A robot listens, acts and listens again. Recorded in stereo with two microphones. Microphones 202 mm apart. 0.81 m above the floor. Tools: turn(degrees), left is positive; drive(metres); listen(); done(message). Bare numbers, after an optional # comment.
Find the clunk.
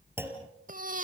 turn(-30)
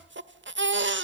listen()
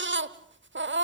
done("I heard a clunk, but can't make it out now. It was about 20° left or 140° right.")